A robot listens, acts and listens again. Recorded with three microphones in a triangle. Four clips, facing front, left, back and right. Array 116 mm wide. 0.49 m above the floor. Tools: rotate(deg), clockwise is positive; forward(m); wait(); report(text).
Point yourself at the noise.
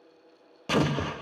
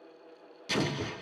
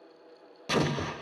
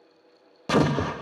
rotate(85)
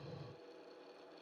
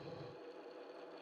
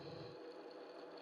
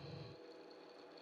report("Facing where the explosion came from. I can't hear it now.")